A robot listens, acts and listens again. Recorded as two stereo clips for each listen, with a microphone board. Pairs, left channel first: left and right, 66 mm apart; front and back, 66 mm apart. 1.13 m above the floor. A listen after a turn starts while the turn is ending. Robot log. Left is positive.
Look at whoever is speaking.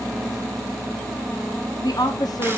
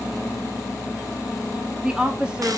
note: The woman speaking: 105° left.
cmd yaw +105
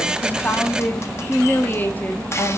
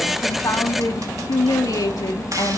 note: The woman speaking is now 30° left.
cmd yaw +30
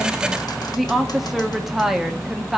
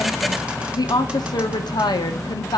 end: Found it: a woman speaking, straight ahead, under 1 m away.